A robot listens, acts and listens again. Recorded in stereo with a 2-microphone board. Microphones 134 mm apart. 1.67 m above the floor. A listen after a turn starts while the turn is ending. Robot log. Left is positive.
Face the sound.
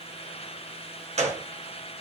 note: The gunshot: about 60° right or 120° right.
cmd yaw -60
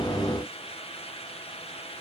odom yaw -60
cmd idle
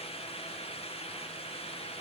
end: I heard a gunshot, but can't make it out now. It was about straight ahead or 60° right.